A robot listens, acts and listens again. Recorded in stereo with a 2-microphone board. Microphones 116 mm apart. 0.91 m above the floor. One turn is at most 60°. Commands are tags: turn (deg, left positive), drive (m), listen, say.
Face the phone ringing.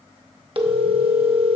<turn deg="-50"/>
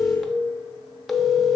<say>Found it: a phone ringing, straight ahead.</say>